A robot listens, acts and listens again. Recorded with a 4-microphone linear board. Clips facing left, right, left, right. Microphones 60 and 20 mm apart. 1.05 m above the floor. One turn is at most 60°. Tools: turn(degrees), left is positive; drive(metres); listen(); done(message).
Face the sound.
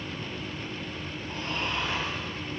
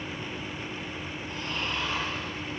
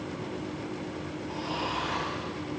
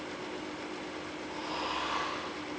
turn(degrees=35)
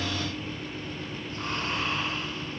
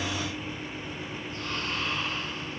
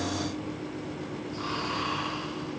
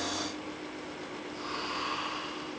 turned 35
turn(degrees=60)
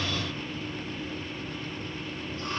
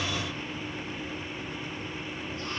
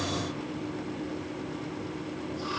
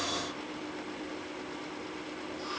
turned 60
turn(degrees=50)
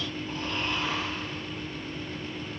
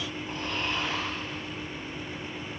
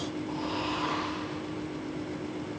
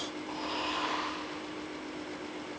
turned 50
turn(degrees=-15)
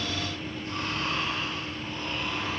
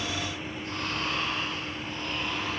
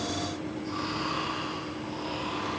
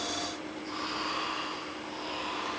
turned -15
done("Facing the snoring, 2 to 4 m away.")